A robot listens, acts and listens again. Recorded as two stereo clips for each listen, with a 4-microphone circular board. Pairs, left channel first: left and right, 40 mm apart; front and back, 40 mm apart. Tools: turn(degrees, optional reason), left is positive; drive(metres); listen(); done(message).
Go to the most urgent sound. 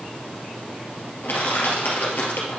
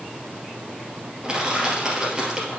listen()
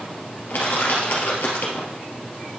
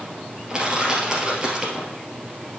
listen()
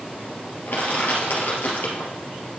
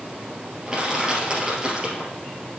done("I can't make out anything urgent to turn to.")